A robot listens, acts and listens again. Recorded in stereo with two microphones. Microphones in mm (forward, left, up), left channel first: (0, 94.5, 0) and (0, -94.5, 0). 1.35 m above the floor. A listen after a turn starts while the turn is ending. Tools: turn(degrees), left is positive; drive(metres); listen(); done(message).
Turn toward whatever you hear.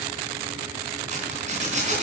turn(degrees=-40)
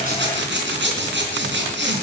turn(degrees=-100)
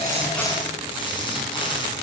turn(degrees=25)
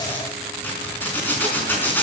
turn(degrees=10)
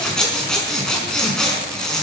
done("Facing the zipper.")